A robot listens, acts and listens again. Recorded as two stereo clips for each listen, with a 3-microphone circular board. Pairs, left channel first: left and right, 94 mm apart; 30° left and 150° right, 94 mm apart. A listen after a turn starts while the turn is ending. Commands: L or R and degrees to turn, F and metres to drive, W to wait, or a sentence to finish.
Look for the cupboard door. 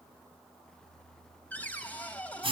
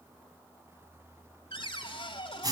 L20
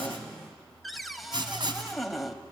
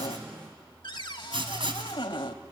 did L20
Facing the cupboard door.